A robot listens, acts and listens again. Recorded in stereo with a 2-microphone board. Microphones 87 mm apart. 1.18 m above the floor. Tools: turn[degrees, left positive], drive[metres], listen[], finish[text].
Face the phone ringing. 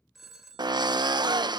Action: turn[-30]
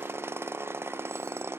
Action: listen[]
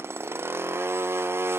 Action: listen[]
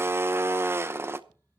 Action: finish[I heard a phone ringing, but can't make it out now. It was about 25° left or 145° right.]